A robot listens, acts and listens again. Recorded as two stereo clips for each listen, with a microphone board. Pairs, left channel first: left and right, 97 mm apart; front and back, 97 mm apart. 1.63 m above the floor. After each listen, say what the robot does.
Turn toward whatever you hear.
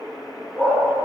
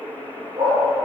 Turn 170° left.
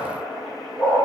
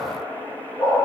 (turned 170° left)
Turn 25° left.
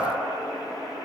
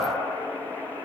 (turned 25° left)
Keep listening.
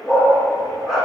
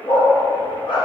Found it: a dog barking, straight ahead, 2 to 4 m away.